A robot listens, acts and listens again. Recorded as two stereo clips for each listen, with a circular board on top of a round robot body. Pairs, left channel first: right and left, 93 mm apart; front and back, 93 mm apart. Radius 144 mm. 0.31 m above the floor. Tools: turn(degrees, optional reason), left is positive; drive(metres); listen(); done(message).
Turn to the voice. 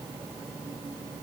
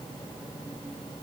listen()
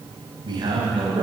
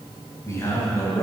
turn(degrees=60, reason="The man speaking: 60° left.")
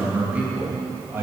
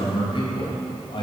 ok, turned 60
turn(degrees=25, reason="The man speaking is now 25° left.")
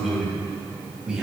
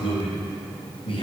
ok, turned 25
turn(degrees=10, reason="The man speaking is now 10° left.")
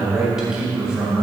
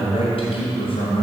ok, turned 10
turn(degrees=10, reason="The man speaking is now 10° left.")
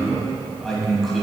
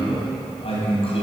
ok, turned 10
done("Facing the man speaking, 2 to 4 m away.")